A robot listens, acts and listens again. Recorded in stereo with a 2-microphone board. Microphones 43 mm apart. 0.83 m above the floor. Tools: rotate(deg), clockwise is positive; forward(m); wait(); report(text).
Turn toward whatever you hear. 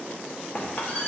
rotate(-35)
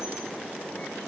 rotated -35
wait()
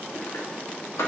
rotate(-110)
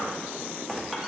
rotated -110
wait()
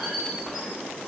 wait()
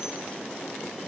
report("Facing where the squeak came from. I can't hear it now.")